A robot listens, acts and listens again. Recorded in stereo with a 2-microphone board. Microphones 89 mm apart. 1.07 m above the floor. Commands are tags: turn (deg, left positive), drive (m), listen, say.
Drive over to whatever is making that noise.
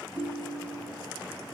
<turn deg="-60"/>
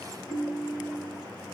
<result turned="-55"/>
<drive m="1.0"/>
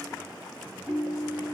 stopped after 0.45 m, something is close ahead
<turn deg="-15"/>
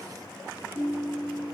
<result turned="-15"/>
<say>Something is in my way. I am facing the ringtone but have not reached it.</say>